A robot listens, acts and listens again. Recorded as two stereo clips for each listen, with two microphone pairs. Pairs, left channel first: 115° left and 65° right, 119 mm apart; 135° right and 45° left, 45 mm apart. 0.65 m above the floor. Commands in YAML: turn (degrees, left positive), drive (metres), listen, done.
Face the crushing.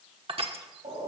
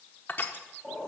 turn: -95
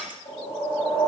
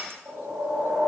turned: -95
turn: 15
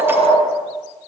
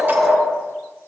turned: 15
listen: true
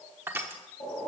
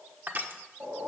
done: "Found it: crushing, straight ahead."